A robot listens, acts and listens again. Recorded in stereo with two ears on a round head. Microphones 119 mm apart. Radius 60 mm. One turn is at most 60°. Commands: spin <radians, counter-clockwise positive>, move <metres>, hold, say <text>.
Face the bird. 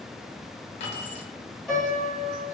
hold
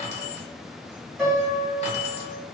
hold
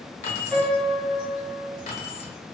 say I can't make out a bird to turn to.